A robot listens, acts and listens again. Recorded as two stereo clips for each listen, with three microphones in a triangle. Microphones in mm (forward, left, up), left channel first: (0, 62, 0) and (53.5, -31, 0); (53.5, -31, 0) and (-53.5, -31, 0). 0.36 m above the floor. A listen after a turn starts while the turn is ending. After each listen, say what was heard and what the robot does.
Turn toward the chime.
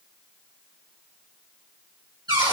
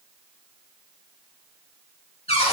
Keep listening.
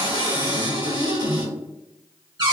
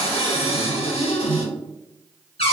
Keep listening.
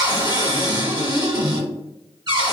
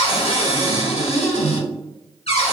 I can't make out a chime, only a cupboard door.